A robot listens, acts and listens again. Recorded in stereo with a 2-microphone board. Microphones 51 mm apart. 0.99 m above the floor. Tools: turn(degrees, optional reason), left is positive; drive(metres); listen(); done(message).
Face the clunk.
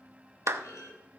turn(degrees=90)
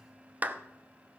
done("I heard a clunk from this way, but can't make it out now.")